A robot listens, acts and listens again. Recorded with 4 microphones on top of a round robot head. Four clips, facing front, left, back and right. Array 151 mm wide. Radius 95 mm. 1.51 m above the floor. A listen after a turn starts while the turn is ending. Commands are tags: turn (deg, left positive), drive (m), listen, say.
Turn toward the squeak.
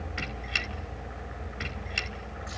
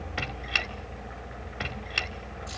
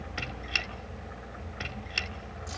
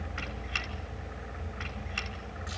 <turn deg="110"/>
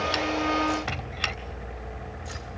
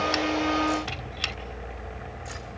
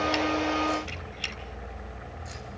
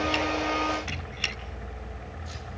<turn deg="15"/>
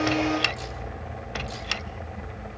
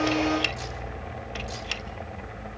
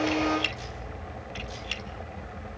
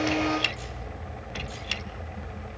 <say>Facing the squeak.</say>